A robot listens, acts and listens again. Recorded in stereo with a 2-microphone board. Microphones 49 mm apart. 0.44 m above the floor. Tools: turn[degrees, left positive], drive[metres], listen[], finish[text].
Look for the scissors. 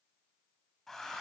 Action: listen[]
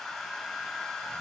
Action: listen[]
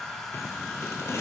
Thought: The scissors: about 65° left or 115° left.
Action: turn[65]
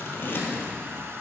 Thought: So it is at 45° left.
Action: turn[45]
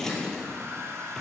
Thought: The scissors is now 10° left.
Action: turn[10]
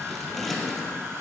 Action: finish[Facing the scissors.]